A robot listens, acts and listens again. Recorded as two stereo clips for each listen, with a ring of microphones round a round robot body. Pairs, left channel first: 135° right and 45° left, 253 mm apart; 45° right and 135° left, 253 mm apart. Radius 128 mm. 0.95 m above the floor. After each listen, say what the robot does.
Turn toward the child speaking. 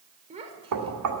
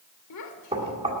Turn 20° right.
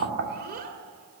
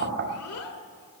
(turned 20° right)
Turn 15° right.
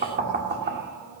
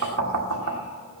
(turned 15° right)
Keep listening.
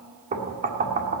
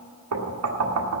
Keep listening.
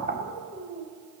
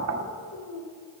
Turn 15° right.
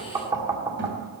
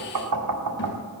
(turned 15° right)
Keep listening.
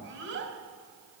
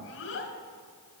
Found it: a child speaking, straight ahead.